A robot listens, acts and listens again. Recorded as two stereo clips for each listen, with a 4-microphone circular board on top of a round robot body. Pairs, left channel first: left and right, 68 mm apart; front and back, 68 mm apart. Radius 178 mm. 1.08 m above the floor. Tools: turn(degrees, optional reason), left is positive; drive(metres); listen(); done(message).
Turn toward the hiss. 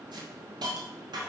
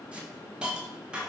turn(degrees=-105, reason="The hiss: 105° right.")
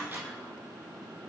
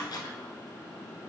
listen()
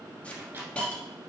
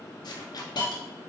turn(degrees=15, reason="The hiss is now 15° left.")
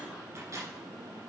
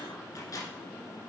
listen()
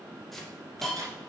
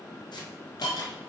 done("Facing the hiss, 1 to 2 m away.")